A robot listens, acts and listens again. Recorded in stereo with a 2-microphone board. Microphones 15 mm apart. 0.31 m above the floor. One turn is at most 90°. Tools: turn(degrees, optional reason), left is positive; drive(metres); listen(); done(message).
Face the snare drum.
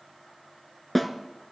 turn(degrees=30)
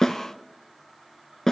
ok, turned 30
turn(degrees=90, reason="So it is at 145° left.")
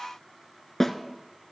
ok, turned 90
turn(degrees=25, reason="The snare drum is now 25° left.")
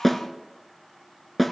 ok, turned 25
turn(degrees=10, reason="The snare drum is now 10° left.")
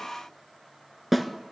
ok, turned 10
done("Found it: a snare drum, straight ahead, 1 to 2 m away.")